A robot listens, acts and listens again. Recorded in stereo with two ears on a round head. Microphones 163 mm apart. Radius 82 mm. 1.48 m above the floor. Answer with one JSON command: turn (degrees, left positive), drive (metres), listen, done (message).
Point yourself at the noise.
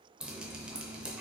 {"turn": -30}
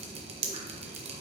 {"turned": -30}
{"turn": -145}
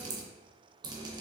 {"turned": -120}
{"turn": -25}
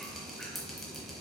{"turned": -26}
{"done": "Facing the dripping."}